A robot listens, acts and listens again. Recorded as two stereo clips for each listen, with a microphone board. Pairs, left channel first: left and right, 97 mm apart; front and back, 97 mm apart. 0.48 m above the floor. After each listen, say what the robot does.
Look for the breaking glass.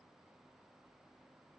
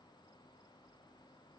Keep listening.
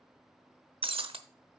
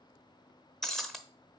Turn 85° right.
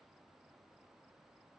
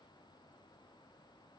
Facing where the breaking glass came from. I can't hear it now.